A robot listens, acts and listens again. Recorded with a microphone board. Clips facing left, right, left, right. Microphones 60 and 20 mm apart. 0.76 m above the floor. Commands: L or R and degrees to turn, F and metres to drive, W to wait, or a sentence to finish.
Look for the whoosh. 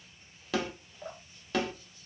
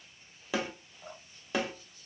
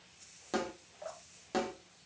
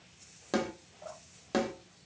W
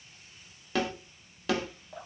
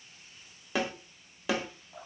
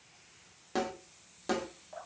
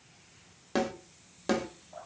W
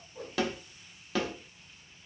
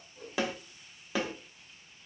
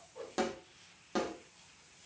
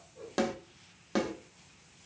L75
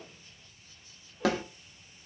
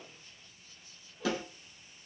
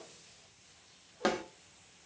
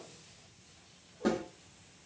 W
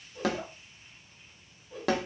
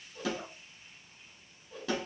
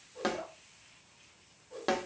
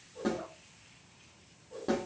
Facing the whoosh, 1 to 2 m away.